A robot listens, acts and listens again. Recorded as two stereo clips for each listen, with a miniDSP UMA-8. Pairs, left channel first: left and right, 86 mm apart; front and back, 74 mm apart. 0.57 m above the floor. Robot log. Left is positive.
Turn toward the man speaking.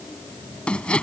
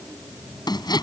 cmd idle
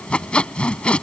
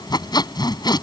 cmd idle
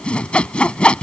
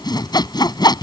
end: I can't make out a man speaking to turn to.